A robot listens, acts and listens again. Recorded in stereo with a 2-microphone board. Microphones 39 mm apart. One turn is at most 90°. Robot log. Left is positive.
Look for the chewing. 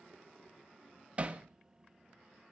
cmd idle
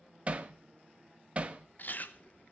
note: The chewing: about 50° left or 130° left.
cmd yaw +50
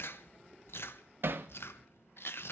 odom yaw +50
note: So it is at 85° left.
cmd yaw +85
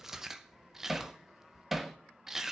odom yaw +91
note: The chewing is now 10° right.
cmd yaw -10
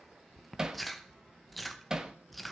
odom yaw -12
end: Facing the chewing.